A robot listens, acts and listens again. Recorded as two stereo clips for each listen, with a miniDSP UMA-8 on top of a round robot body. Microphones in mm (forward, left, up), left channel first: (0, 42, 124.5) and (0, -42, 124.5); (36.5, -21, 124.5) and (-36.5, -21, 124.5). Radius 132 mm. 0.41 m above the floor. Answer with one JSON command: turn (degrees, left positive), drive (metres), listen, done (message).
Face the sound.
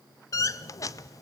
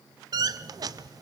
{"turn": 140}
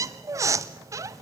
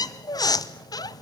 {"turn": -35}
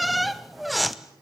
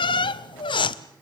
{"done": "Facing the squeak, under 1 m away."}